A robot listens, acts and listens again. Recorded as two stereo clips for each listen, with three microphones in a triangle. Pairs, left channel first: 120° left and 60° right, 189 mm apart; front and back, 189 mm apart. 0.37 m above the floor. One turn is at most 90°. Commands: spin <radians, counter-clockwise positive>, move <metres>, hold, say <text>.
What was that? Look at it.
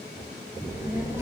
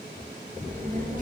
spin -1.57
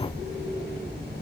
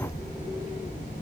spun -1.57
spin -0.87
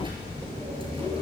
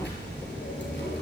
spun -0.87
say Facing the child speaking, over 4 m away.